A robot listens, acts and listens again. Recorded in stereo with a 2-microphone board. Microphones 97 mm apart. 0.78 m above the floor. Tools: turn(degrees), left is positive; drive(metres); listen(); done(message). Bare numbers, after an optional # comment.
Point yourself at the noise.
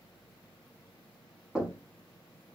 turn(30)
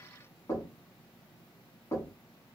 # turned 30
# So it is at 145° left.
turn(145)
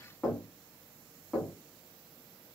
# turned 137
done("Found it: knocking, straight ahead.")